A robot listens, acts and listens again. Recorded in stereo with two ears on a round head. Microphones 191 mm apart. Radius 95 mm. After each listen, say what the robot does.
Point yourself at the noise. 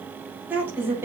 Turn 30° right.
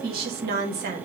Turn 130° right.
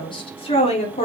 Turn 35° left.
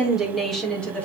Facing the woman speaking, 2 to 4 m away.